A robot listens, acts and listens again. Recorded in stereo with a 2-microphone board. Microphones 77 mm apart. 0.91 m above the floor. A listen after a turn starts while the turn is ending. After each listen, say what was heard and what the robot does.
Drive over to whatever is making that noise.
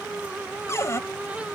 The cupboard door: about 35° left or 145° left. Turn 35° left.
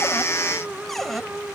Drive 1.0 m forward.
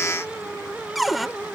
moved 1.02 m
Drive 1.0 m forward.
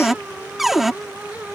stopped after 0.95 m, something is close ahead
I am next to the cupboard door.